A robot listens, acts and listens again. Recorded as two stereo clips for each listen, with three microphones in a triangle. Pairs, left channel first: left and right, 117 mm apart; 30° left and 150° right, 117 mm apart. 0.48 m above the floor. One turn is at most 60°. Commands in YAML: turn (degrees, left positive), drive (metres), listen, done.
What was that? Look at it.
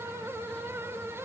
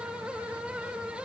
listen: true
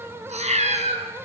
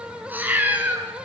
turn: -60
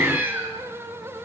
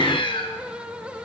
turn: -15
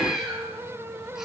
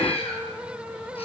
done: "Facing the cat meowing."